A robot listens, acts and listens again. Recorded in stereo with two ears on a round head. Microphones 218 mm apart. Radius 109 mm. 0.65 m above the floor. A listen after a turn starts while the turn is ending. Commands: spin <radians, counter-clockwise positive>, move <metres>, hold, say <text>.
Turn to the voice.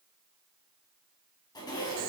hold
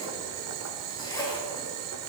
hold
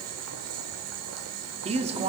spin -0.44
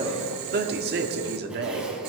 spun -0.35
spin -2.27
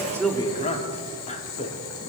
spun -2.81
spin 0.52
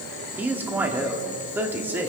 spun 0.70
spin -0.17
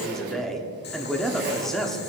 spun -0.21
say Facing the man speaking.